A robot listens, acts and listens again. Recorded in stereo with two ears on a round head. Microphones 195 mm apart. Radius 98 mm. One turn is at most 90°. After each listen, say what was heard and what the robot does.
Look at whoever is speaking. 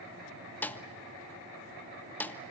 Keep listening.
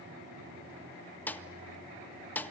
Keep listening.
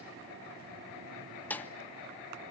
I can't make out anyone speaking, only a snare drum.